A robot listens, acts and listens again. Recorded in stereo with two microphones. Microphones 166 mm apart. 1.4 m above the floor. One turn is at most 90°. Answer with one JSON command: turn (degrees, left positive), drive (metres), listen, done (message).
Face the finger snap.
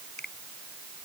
{"turn": 90}
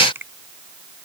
{"turn": -15}
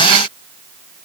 {"listen": true}
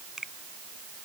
{"done": "Facing the finger snap."}